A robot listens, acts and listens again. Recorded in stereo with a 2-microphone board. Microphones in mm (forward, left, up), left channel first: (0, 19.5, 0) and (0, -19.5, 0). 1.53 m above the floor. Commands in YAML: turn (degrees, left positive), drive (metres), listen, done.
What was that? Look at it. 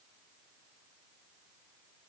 listen: true
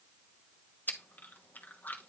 turn: 50
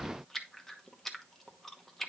turn: 10
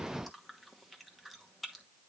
done: "Facing the chewing."